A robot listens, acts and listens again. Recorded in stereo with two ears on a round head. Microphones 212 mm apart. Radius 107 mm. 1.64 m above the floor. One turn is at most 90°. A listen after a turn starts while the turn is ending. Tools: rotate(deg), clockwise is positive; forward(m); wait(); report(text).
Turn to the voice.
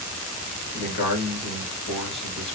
rotate(-55)
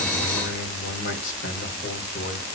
rotate(-65)
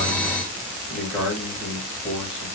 report("Facing the man speaking.")